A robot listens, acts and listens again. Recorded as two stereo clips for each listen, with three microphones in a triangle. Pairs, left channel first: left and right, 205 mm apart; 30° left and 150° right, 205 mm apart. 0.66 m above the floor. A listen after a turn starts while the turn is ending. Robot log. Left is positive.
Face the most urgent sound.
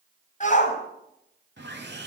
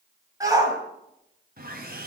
note: The shout: 140° left.
cmd yaw +140
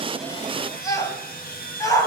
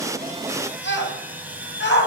note: The shout is now 20° left.
cmd yaw +20
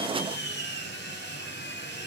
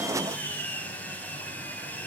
cmd idle
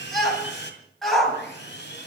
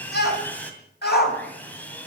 end: Found it: a shout, straight ahead, over 4 m away.